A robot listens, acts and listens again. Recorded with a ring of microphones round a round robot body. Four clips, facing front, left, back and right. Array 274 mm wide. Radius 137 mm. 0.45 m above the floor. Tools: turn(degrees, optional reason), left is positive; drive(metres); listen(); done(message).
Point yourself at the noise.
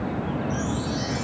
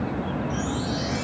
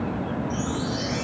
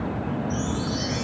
turn(degrees=-95, reason="The chime: 95° right.")
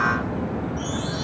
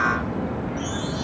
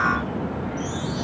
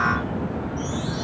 done("Found it: a chime, straight ahead, over 4 m away.")